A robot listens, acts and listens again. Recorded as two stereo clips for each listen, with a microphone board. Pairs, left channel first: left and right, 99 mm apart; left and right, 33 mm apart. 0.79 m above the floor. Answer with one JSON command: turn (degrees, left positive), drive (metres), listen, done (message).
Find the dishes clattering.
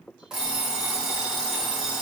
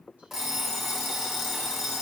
{"listen": true}
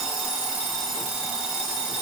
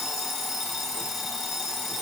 {"listen": true}
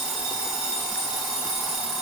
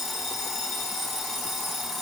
{"done": "I can't make out dishes clattering, only an alarm clock."}